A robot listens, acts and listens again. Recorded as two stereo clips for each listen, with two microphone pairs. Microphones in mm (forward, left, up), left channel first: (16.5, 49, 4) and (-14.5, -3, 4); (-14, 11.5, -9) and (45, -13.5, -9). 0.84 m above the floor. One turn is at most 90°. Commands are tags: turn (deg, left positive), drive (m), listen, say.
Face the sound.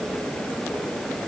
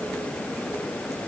<listen/>
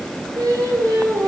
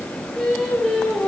<turn deg="-90"/>
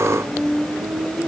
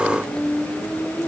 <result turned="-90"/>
<turn deg="-30"/>
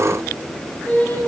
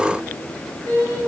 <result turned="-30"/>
<say>Found it: singing, straight ahead.</say>